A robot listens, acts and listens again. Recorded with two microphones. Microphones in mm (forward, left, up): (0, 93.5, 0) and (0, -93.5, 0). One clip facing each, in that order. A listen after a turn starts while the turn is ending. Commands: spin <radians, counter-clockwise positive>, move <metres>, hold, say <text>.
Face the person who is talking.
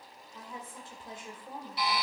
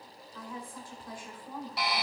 spin 0.44
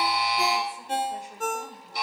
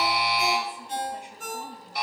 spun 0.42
hold
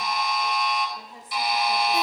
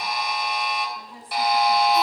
spin 2.27
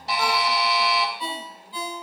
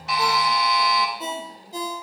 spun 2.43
spin -0.17
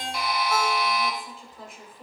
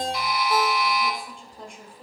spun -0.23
say Facing the woman speaking, 1 to 2 m away.